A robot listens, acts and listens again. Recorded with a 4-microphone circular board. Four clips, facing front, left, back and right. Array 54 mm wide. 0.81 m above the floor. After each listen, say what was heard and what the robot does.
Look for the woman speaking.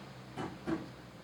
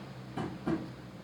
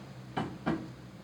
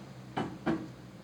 Keep listening.
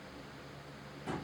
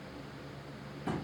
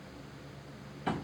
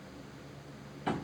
Keep listening.
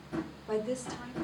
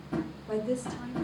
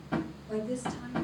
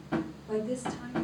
The woman speaking: 15° left. Turn 15° left.
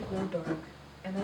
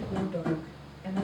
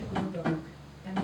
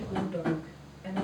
The woman speaking is now 10° right. Turn 10° right.
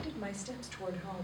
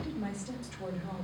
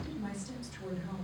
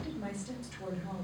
Facing the woman speaking.